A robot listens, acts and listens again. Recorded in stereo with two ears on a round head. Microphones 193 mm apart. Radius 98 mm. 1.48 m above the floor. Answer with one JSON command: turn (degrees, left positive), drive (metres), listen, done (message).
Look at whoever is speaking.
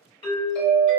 {"listen": true}
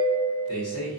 {"turn": 90}
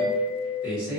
{"done": "Facing the man speaking, 1 to 2 m away."}